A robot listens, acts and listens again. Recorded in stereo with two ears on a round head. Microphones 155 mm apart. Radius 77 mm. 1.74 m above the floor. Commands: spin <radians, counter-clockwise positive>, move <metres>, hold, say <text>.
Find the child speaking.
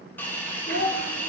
spin 1.05
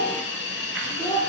spin 0.26
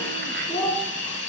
spin 0.17
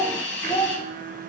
spin 0.26
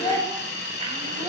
spin 0.17
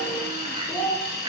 spin 0.17
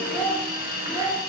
say Found it: a child speaking, straight ahead.